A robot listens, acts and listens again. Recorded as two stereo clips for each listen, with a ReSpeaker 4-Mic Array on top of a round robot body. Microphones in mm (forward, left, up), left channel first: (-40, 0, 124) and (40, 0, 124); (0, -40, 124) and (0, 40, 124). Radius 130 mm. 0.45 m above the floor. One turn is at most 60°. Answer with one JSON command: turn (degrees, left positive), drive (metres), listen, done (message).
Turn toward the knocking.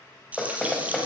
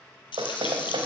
{"turn": 60}
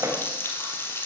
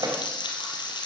{"turn": 50}
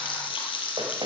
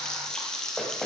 {"listen": true}
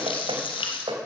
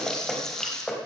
{"done": "Facing the knocking."}